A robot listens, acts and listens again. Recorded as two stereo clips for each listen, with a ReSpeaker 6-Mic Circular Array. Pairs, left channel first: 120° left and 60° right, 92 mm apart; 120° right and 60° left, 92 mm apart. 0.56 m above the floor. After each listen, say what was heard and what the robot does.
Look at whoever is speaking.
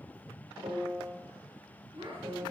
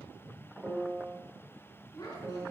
The child speaking: 70° right. Turn 70° right.
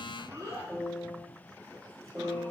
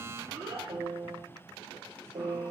Facing the child speaking, over 4 m away.